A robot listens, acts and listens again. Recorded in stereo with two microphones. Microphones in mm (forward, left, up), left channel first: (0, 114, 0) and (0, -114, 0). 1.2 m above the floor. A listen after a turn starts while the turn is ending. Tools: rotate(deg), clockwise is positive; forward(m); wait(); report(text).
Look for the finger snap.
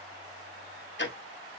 wait()
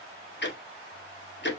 wait()
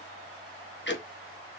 report("I can't make out a finger snap to turn to.")